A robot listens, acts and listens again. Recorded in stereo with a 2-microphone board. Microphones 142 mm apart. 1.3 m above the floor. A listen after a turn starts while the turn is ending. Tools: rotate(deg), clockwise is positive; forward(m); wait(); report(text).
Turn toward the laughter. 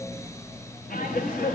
rotate(-90)
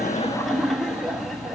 report("Found it: laughter, straight ahead, 1 to 2 m away.")